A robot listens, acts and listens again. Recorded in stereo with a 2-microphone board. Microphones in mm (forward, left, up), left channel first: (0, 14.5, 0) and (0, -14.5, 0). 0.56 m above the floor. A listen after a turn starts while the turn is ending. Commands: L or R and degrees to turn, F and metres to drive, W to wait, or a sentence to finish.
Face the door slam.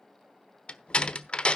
L40
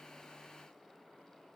W
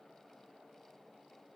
I heard a door slam, but can't make it out now. It was about straight ahead or 100° left.